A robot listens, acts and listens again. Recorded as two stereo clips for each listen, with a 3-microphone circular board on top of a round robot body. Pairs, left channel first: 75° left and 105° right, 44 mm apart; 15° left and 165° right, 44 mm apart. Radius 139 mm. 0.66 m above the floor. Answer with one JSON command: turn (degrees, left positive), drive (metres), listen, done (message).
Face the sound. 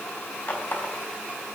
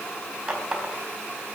{"turn": 125}
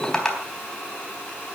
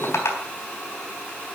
{"done": "Facing the running tap, 2 to 4 m away."}